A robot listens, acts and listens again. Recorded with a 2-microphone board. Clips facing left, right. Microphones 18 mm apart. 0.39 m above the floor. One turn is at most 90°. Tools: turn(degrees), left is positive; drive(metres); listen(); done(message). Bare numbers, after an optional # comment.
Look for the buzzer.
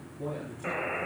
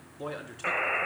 # The buzzer: about 35° right or 145° right.
turn(-35)
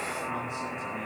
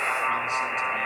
# So it is at 100° right.
turn(-90)
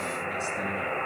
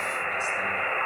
# The buzzer is now 25° right.
turn(-25)
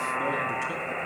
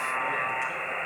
# The buzzer is now 10° right.
turn(-10)
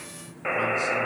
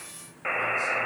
done("Found it: a buzzer, straight ahead, 1 to 2 m away.")